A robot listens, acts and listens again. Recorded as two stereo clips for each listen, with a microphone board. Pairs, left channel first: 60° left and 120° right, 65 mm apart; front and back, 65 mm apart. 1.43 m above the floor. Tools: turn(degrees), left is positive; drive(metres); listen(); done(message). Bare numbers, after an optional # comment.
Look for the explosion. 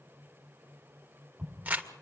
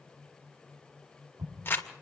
# The explosion: 170° left.
turn(170)
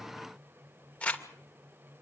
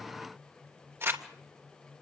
done("I heard an explosion from this way, but can't make it out now.")